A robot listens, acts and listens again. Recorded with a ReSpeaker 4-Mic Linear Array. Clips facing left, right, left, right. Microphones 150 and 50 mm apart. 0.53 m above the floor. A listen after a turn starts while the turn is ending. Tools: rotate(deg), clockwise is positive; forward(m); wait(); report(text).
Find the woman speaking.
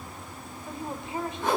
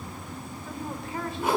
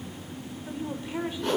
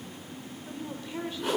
rotate(-20)
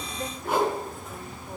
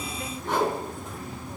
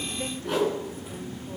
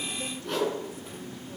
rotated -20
wait()
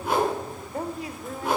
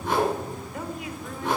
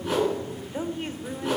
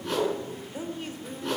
rotate(-140)
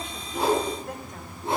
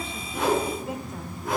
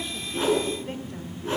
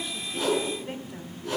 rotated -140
report("Found it: a woman speaking, straight ahead, 1 to 2 m away.")